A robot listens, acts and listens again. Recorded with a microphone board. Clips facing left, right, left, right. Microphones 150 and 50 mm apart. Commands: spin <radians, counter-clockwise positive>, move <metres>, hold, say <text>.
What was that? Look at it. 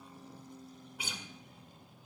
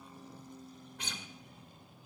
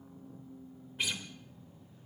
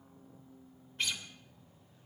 spin 0.52
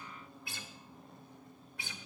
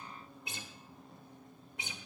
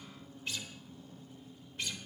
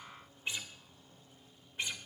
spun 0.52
spin -0.35
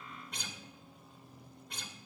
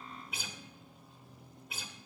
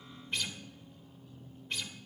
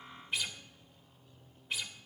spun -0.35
say Found it: a guitar, straight ahead, 1 to 2 m away.